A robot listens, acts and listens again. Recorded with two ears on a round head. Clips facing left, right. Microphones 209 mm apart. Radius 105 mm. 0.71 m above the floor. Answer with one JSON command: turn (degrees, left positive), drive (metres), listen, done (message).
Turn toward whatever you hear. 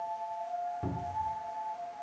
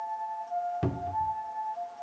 {"turn": -90}
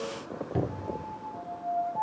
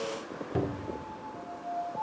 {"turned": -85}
{"done": "Found it: a cupboard door, straight ahead."}